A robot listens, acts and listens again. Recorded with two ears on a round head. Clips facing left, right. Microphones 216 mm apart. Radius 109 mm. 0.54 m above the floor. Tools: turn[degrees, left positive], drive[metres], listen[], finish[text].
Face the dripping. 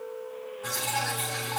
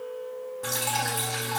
Thought: The dripping: about 45° right or 135° right.
Action: turn[-45]
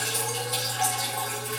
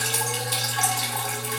Thought: So it is at 85° right.
Action: turn[-85]
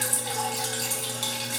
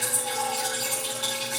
Thought: The dripping is now 35° left.
Action: turn[35]
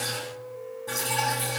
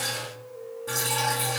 Thought: The dripping is now 10° right.
Action: turn[-10]
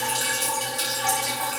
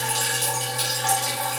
Action: finish[Facing the dripping, over 4 m away.]